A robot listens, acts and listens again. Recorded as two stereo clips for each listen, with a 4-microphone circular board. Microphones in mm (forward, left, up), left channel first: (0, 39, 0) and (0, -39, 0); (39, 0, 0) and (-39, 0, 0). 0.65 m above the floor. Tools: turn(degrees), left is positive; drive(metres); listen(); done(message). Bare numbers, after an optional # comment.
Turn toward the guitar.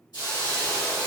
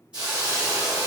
listen()
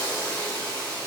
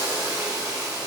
listen()
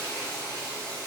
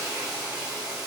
done("I can't make out a guitar to turn to.")